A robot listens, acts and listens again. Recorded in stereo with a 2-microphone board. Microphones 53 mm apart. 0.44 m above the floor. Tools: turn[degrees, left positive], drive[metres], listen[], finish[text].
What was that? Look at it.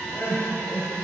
Thought: The crying: about 50° left or 130° left.
Action: turn[50]
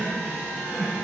Action: finish[Facing the crying.]